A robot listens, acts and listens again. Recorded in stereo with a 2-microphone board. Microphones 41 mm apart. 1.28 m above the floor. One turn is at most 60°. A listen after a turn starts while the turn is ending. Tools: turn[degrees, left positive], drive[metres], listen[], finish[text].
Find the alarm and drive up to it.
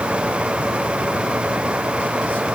Action: listen[]
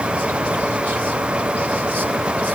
Action: listen[]
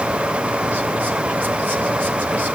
Action: finish[I can't make out an alarm.]